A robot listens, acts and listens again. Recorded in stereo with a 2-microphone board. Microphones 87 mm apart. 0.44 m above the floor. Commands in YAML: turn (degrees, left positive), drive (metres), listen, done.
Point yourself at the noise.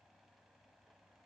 listen: true
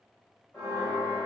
turn: 25
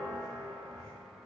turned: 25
turn: 125
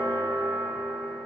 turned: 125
turn: 30
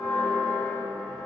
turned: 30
done: "Found it: a bell, straight ahead, 1 to 2 m away."